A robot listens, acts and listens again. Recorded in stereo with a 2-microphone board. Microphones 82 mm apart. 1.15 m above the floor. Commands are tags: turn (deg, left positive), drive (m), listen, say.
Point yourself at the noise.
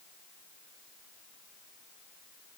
<listen/>
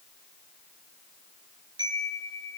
<turn deg="-65"/>
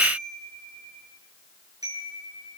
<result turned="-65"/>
<turn deg="-50"/>
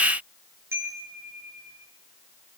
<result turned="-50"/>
<turn deg="-30"/>
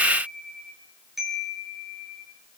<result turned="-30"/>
<say>Found it: a chime, straight ahead, over 4 m away.</say>